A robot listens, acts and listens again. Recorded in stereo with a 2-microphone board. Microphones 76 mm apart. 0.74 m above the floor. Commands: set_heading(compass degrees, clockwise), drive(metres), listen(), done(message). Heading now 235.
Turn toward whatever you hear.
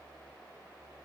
listen()
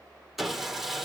set_heading(265)
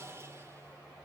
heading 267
set_heading(52)
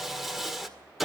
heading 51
done("Found it: sawing, straight ahead.")